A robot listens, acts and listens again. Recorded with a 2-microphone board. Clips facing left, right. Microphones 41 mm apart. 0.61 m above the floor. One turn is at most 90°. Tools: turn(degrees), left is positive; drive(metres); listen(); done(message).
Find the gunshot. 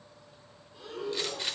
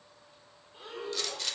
turn(degrees=20)
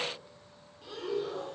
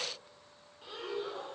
listen()
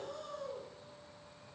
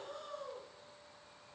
done("I heard a gunshot, but can't make it out now. It was about straight ahead or 140° left.")